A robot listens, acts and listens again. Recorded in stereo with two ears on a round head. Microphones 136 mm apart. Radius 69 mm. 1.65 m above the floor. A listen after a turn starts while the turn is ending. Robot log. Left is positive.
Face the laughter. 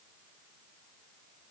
cmd idle
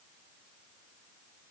cmd idle
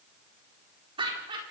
note: The laughter: about 35° right or 145° right.
cmd yaw -35
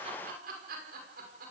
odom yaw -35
note: So it is at 115° right.
cmd yaw -115
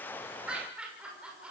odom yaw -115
end: Found it: laughter, straight ahead, over 4 m away.